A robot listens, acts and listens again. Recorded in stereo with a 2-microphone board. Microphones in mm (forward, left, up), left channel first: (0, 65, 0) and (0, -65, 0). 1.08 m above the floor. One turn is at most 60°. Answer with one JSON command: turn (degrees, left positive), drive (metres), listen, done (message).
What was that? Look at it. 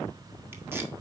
{"listen": true}
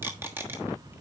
{"turn": -15}
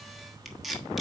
{"done": "Facing the tape being pulled."}